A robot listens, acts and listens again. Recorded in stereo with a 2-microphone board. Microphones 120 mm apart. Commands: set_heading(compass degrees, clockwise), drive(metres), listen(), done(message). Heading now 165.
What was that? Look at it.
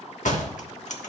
set_heading(75)
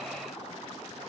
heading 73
done("I heard a door slam from this way, but can't make it out now.")